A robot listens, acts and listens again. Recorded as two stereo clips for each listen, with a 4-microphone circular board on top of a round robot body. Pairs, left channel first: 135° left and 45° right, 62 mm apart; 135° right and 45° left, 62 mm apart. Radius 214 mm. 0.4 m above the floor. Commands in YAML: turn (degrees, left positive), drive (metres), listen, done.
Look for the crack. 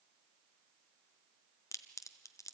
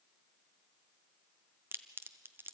turn: 100
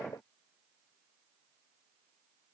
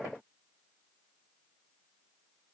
done: "Facing where the crack came from. I can't hear it now."